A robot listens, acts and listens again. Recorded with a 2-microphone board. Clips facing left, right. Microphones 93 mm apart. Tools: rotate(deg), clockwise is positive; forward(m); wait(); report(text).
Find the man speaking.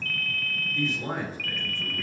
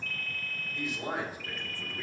rotate(30)
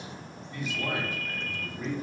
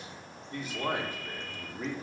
rotate(130)
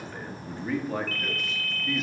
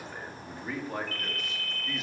report("Found it: a man speaking, straight ahead.")